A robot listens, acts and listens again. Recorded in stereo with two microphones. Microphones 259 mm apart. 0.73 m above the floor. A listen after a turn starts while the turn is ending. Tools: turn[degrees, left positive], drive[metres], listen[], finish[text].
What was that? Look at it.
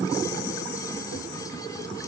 Action: listen[]
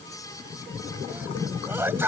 Action: turn[-30]
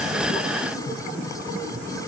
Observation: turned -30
Action: listen[]
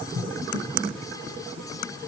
Action: finish[I heard a sneeze, but can't make it out now. It was about 20° left or 140° right.]